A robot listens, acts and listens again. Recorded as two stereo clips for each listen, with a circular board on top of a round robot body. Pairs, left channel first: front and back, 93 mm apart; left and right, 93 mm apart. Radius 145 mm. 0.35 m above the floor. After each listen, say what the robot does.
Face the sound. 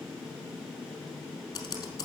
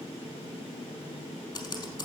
Turn 50° left.
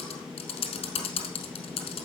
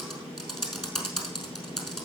Found it: typing on a keyboard, straight ahead.